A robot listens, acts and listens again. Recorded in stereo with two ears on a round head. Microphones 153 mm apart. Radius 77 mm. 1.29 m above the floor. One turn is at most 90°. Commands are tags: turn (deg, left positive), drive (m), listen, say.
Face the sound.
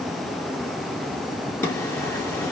<turn deg="30"/>
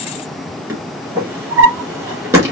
<turn deg="-15"/>
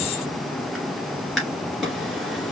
<say>Found it: a drawer, straight ahead, 2 to 4 m away.</say>